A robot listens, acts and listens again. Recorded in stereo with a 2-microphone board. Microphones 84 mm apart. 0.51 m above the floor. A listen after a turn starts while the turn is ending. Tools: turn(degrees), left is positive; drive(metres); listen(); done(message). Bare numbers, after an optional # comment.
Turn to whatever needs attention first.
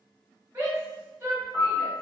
# The shout: about 30° right or 150° right.
turn(-30)
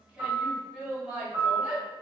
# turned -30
done("Facing the shout.")